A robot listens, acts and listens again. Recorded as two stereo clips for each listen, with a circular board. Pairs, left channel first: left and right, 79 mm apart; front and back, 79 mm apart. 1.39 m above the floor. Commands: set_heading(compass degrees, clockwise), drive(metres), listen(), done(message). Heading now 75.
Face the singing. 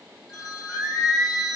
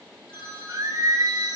set_heading(250)
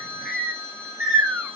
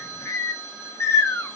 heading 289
set_heading(324)
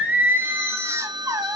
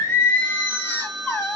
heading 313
set_heading(13)
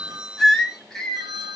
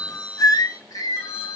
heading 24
set_heading(14)
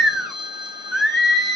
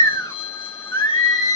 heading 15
done("Found it: singing, straight ahead, 1 to 2 m away.")